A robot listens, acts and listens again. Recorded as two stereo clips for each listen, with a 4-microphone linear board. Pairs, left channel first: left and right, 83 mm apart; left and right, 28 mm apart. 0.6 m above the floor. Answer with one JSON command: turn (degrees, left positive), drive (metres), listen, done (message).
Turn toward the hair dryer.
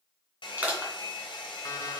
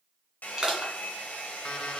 {"turn": 90}
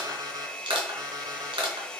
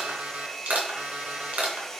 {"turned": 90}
{"turn": 15}
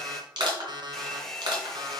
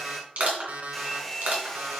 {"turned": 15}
{"done": "Found it: a hair dryer, straight ahead."}